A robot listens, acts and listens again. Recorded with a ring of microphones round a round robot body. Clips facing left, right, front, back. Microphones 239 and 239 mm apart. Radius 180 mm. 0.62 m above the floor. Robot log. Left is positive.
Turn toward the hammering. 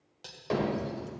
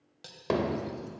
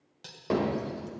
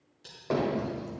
note: The hammering: 60° right.
cmd yaw -60
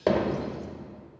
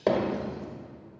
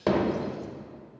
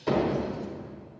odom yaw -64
end: Facing the hammering.